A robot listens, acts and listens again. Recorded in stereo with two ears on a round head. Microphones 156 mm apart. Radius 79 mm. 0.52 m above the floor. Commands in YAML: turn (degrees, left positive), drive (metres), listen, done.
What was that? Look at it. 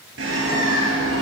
turn: -90
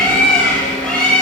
done: "Found it: a bird, straight ahead."